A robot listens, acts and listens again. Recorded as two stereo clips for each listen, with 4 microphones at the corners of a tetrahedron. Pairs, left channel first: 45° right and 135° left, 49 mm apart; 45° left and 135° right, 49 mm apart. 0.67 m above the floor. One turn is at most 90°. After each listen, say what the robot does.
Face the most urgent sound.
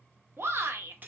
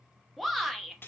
Turn 90° left.
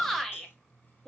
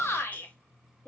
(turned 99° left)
Turn 35° left.
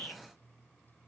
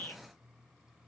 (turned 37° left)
Facing the shout.